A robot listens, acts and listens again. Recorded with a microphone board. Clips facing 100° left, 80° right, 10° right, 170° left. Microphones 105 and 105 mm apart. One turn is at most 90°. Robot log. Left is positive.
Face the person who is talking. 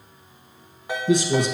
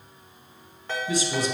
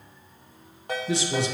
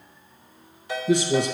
note: The man speaking: 125° left.
cmd yaw +90
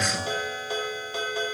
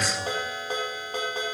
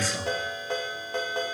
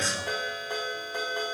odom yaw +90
note: The man speaking is now 65° left.
cmd yaw +65
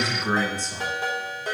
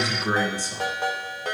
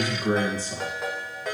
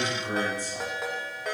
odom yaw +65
end: Facing the man speaking.